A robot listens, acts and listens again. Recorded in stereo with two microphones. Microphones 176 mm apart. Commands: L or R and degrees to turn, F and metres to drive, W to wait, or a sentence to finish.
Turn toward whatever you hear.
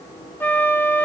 L30
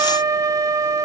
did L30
R20
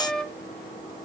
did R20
Facing the flute, under 1 m away.